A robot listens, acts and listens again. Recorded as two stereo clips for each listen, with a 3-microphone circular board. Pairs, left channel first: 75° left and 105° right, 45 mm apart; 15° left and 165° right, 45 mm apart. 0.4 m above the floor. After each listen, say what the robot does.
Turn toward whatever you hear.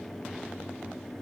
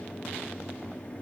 Keep listening.
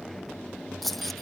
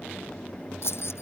Turn 10° right.
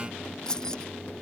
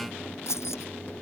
Found it: keys jangling, straight ahead.